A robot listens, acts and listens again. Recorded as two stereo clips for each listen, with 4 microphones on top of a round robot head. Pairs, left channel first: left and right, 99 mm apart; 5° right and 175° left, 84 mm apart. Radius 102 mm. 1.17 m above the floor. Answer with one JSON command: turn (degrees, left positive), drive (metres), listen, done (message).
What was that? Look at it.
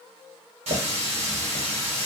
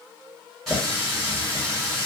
{"turn": -95}
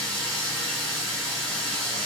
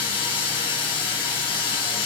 {"turn": 10}
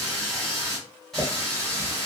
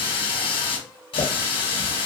{"done": "Facing the running tap."}